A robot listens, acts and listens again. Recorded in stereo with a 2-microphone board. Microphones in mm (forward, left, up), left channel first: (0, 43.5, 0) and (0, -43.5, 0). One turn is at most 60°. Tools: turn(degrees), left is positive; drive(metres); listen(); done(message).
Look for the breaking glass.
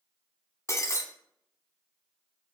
turn(degrees=35)
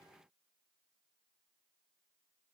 listen()
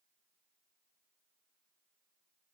done("I heard breaking glass, but can't make it out now. It was about straight ahead or 110° left.")